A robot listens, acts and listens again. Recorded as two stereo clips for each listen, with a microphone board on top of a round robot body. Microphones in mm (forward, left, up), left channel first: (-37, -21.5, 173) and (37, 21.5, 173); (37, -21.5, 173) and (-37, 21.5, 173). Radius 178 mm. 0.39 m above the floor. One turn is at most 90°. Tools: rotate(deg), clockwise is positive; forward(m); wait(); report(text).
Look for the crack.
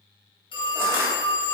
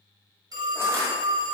wait()
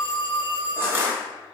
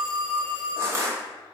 wait()
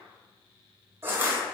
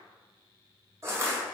report("I can't make out a crack, only a phone ringing and crushing.")